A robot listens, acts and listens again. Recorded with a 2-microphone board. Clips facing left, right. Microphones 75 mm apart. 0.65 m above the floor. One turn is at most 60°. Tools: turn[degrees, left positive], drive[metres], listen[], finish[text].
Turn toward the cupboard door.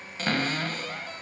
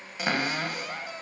Action: turn[-30]
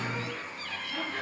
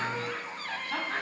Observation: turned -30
Thought: So it is at 135° right.
Action: turn[-60]
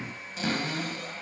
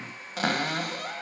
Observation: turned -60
Thought: The cupboard door is now 115° right.
Action: turn[-60]
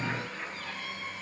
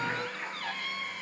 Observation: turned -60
Thought: The cupboard door is now 65° right.
Action: turn[-60]
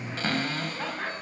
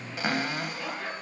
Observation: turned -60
Thought: The cupboard door is now 15° right.
Action: turn[-15]
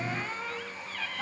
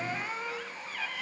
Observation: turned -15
Action: finish[Facing the cupboard door, 1 to 2 m away.]